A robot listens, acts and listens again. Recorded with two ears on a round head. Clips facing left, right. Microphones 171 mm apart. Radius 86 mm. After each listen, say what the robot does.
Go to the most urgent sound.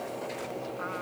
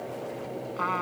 Keep listening.
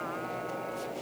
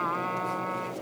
Keep listening.
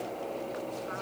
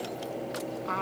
I can't make out anything urgent, only a trumpet.